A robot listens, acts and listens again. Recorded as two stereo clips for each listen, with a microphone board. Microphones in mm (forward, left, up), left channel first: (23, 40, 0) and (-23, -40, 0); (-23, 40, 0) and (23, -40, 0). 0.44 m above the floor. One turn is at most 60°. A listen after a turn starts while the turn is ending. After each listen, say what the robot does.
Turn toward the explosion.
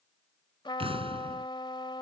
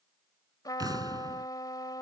Turn 60° right.
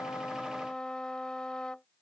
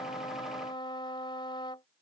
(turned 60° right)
Turn 50° right.
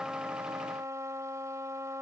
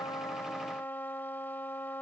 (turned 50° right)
I heard an explosion from this way, but can't make it out now.